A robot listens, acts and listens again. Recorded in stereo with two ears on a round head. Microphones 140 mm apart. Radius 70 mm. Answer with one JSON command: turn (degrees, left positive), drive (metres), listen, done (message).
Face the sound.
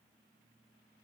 {"listen": true}
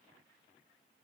{"listen": true}
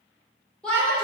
{"turn": 30}
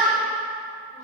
{"turn": -25}
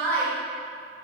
{"turn": 15}
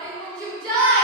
{"done": "Found it: a shout, straight ahead."}